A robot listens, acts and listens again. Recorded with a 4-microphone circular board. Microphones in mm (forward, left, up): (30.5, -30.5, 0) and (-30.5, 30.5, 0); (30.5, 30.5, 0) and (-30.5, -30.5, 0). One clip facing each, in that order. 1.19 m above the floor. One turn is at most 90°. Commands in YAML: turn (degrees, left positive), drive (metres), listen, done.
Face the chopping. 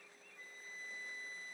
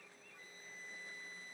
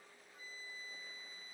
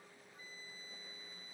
listen: true
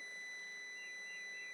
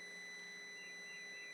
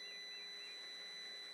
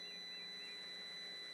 listen: true
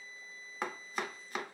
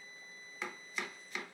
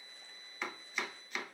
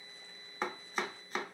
turn: -85
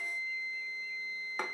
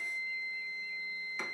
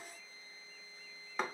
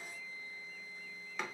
done: "Facing the chopping, under 1 m away."